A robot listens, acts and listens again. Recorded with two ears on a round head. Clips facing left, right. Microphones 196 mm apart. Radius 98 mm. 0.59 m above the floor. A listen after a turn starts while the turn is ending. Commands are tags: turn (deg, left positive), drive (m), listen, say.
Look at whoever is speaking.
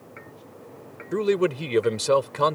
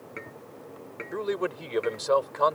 <turn deg="40"/>
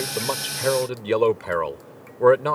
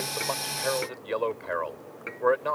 <turn deg="95"/>
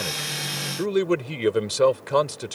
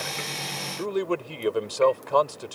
<turn deg="30"/>
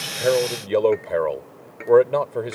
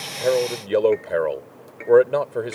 <say>Found it: a man speaking, straight ahead.</say>